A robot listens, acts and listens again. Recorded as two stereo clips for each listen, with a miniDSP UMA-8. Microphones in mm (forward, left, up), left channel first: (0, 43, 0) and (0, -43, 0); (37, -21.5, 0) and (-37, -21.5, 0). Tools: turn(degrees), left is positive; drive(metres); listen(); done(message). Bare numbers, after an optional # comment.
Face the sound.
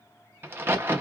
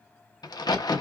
# The crack: 25° right.
turn(-25)
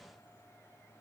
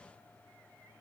done("I heard a crack from this way, but can't make it out now.")